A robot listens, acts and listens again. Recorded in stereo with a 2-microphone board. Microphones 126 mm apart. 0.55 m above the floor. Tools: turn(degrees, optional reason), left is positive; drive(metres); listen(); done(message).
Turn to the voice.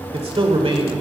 turn(degrees=-50, reason="The man speaking: about 50° right or 130° right.")
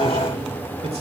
listen()
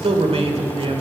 turn(degrees=-70, reason="So it is at 70° right.")
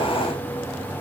listen()
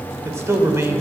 turn(degrees=-25, reason="The man speaking is now 25° right.")
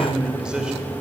turn(degrees=-10, reason="The man speaking is now 10° right.")
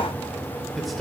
done("Found it: a man speaking, straight ahead.")